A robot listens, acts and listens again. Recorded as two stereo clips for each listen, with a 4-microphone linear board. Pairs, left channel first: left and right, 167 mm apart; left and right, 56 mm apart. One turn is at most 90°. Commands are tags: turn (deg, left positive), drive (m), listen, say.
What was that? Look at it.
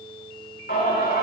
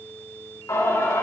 <turn deg="90"/>
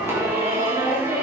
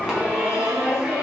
<turn deg="-15"/>
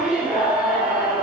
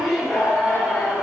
<say>Facing the singing, over 4 m away.</say>